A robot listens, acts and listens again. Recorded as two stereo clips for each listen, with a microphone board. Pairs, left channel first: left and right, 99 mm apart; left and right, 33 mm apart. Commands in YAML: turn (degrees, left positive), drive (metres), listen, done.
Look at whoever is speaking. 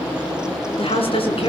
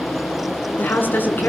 turn: 70
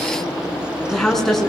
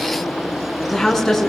done: "Facing the woman speaking."